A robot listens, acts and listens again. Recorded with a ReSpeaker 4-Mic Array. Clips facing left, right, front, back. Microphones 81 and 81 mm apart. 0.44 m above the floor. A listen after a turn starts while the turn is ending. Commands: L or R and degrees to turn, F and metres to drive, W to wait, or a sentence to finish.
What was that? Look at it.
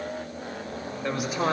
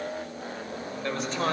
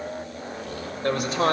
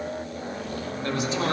L10
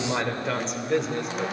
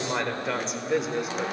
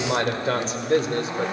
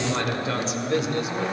R10
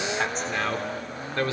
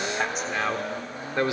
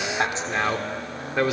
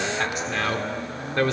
R70
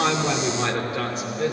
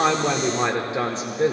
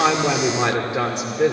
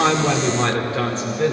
R60
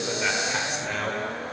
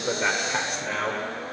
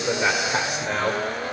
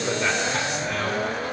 Found it: a man speaking, straight ahead.